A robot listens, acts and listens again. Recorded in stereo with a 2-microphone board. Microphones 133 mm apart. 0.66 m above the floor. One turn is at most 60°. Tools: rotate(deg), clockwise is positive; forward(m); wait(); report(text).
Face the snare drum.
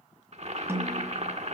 rotate(20)
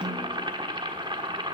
rotate(60)
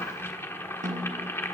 rotate(60)
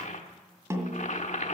rotate(20)
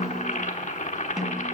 report("Found it: a snare drum, straight ahead, 1 to 2 m away.")